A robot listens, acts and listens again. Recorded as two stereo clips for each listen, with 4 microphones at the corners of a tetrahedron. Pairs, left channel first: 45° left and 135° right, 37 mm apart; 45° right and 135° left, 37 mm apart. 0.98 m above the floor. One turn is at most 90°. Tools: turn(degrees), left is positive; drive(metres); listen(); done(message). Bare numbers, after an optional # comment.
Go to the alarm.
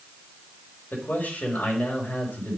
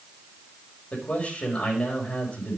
listen()
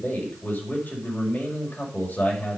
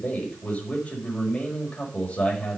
listen()
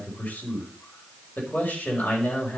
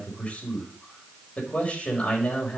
done("I can't make out an alarm, only a man speaking.")